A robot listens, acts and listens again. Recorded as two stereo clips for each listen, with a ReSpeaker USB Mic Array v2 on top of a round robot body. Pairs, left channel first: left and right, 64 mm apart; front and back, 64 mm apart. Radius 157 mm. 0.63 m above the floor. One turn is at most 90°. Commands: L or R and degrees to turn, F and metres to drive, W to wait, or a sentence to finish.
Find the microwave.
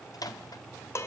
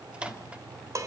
L90
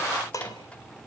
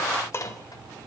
L15
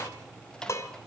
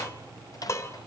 L10
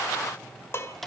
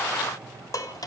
Found it: a microwave, straight ahead, 2 to 4 m away.